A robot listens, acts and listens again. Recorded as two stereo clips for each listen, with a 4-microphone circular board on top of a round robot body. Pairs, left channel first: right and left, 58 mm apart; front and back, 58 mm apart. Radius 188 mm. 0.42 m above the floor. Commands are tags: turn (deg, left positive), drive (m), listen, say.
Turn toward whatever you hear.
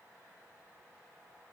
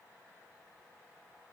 <listen/>
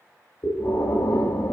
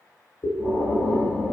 <turn deg="-50"/>
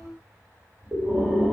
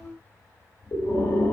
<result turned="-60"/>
<turn deg="10"/>
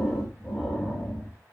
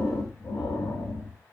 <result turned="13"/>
<say>Facing the breathing, 1 to 2 m away.</say>